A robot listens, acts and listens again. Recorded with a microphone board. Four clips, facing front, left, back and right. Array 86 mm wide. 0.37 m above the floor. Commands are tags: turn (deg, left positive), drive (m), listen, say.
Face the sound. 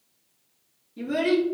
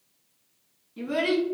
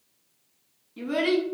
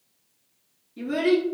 <turn deg="150"/>
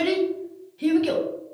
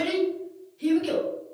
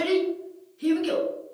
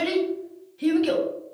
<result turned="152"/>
<turn deg="-40"/>
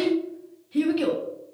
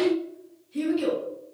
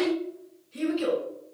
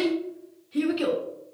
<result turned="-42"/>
<turn deg="-30"/>
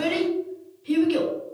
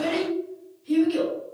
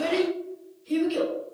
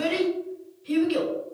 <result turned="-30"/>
<turn deg="-10"/>
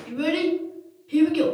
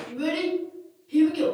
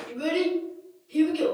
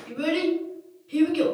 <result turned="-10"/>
<say>Found it: a child speaking, straight ahead, 1 to 2 m away.</say>